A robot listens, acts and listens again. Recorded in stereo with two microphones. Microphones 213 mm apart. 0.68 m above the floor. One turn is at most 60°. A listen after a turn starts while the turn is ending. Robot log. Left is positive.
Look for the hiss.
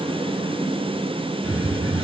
note: The hiss: about 70° right or 110° right.
cmd yaw -60
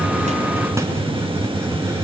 note: So it is at 15° right.
cmd yaw -15
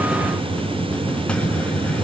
end: Found it: a hiss, straight ahead, 2 to 4 m away.